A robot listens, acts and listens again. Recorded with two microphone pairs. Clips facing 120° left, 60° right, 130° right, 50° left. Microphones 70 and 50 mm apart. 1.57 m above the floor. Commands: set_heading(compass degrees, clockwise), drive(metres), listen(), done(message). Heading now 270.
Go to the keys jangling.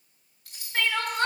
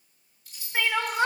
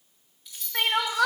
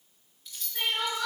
set_heading(125)
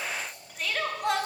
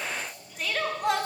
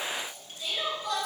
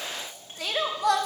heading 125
listen()
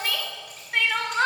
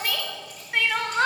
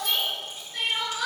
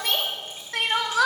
listen()
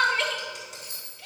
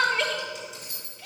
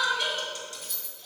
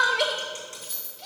set_heading(170)
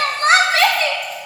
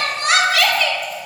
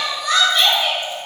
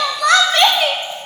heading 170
listen()
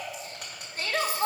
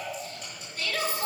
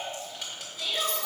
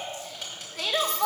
listen()
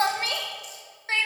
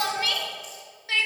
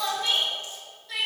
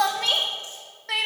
done("I heard keys jangling from this way, but can't make it out now. I did not reach it.")